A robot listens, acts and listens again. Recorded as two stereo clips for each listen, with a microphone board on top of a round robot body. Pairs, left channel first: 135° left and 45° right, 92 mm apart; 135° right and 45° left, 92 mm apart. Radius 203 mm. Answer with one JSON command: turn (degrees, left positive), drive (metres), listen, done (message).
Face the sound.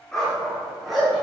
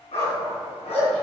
{"turn": -135}
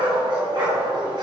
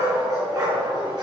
{"done": "Facing the dog barking."}